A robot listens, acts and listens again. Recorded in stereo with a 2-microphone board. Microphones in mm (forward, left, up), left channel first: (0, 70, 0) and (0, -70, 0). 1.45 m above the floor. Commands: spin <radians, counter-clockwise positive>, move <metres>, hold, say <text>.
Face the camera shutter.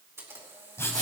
spin -0.35
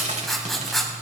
hold
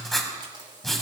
hold
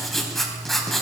say I heard a camera shutter, but can't make it out now. It was about straight ahead or 140° right.